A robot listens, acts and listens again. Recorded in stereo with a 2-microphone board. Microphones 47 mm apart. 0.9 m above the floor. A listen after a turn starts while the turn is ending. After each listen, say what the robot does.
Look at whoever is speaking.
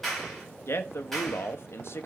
Turn 60° left.
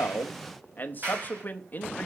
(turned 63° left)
Turn 45° left.
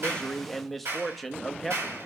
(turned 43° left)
Facing the man speaking, under 1 m away.